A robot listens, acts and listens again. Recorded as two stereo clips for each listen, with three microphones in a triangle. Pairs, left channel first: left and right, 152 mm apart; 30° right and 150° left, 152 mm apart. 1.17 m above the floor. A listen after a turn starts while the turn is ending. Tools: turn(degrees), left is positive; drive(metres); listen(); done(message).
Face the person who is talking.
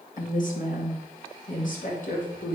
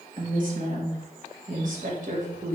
turn(degrees=120)
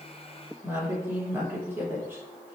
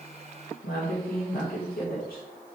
turn(degrees=-15)
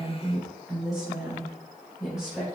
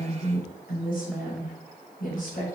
done("Facing the woman speaking.")